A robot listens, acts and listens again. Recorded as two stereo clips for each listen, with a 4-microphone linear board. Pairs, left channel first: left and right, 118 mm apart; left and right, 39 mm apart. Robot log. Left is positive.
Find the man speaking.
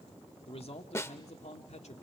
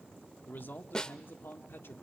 note: The man speaking: about 70° left or 110° left.
cmd yaw +70
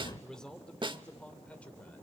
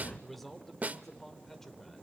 note: So it is at 10° left.
cmd yaw +10
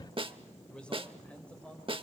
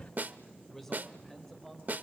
note: The man speaking is now 10° left.
cmd yaw +10
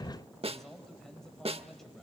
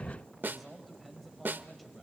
end: Facing the man speaking.